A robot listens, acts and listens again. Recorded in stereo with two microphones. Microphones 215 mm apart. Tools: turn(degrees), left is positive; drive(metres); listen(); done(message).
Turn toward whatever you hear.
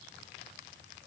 listen()
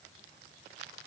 listen()
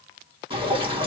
turn(degrees=-25)
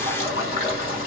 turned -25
turn(degrees=-125)
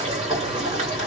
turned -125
turn(degrees=-35)
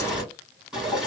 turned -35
done("Found it: dripping, straight ahead, 2 to 4 m away.")